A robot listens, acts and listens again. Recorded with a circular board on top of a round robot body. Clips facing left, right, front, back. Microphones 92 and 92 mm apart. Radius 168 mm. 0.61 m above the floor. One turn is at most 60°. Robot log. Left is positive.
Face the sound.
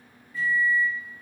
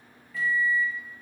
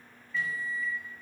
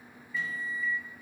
note: The microwave: 100° right.
cmd yaw -60
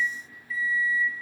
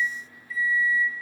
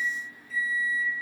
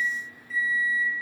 note: The microwave is now 45° right.
cmd yaw -45
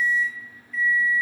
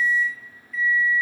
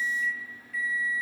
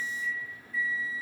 end: Found it: a microwave, straight ahead, under 1 m away.